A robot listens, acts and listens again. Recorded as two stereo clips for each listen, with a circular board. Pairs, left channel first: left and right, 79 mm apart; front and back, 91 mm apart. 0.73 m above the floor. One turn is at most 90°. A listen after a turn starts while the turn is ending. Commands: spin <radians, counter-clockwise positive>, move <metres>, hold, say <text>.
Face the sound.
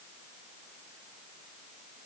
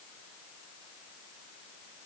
hold
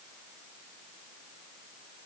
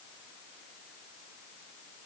hold
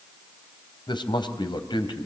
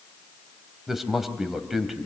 spin 1.57
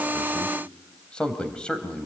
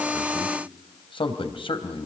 spin 0.17
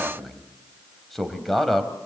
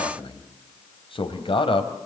say Facing the man speaking.